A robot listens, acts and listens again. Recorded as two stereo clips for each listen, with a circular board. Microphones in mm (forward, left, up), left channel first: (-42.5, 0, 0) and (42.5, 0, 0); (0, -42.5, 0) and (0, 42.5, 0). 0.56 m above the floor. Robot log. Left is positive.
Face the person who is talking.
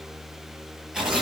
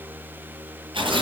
cmd idle
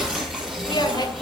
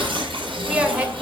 note: The woman speaking: 165° left.
cmd yaw +165
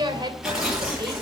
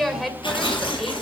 end: Found it: a woman speaking, straight ahead, 2 to 4 m away.